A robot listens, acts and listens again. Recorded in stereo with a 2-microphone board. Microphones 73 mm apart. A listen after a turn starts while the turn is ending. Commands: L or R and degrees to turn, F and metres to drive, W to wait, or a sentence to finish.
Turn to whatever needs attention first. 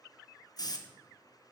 W
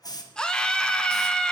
L30
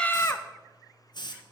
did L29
L140
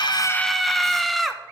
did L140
Facing the scream.